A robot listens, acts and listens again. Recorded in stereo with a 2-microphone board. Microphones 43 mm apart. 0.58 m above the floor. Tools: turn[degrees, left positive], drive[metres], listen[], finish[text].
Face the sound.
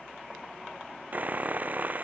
Thought: The sawing: about 40° right or 140° right.
Action: turn[-40]
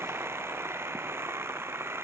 Thought: So it is at 95° right.
Action: turn[-95]
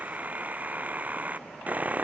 Thought: The sawing is now 40° right.
Action: turn[-40]
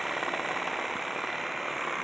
Action: finish[Facing the sawing.]